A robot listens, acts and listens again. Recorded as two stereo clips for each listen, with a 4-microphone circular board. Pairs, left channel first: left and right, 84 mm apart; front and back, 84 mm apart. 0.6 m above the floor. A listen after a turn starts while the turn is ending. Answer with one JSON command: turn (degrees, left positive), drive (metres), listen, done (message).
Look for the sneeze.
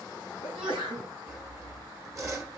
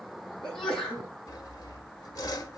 {"turn": -80}
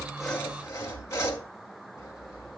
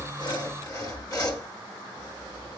{"done": "I heard a sneeze from this way, but can't make it out now."}